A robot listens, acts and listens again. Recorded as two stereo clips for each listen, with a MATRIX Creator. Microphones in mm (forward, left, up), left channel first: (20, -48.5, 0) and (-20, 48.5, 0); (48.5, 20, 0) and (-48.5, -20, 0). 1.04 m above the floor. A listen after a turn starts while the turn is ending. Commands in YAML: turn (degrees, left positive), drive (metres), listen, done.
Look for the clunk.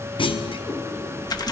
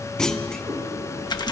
turn: -60
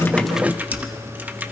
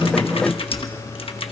done: "Facing where the clunk came from. I can't hear it now."